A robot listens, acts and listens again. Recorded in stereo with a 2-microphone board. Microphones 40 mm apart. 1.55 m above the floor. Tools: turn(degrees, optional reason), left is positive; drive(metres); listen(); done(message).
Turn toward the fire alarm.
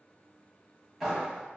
listen()
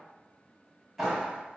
listen()
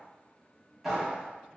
done("I can't make out a fire alarm to turn to.")